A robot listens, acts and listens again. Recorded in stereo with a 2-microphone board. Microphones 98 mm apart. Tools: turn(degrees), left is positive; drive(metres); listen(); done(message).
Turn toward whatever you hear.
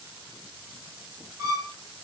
turn(degrees=-40)
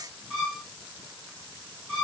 done("Found it: a violin, straight ahead.")